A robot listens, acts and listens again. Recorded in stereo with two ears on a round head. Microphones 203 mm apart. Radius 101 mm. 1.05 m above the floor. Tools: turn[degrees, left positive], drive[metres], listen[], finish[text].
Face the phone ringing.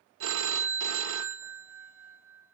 Thought: The phone ringing: about 60° right or 120° right.
Action: turn[-60]
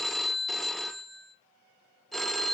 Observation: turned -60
Action: finish[Facing the phone ringing.]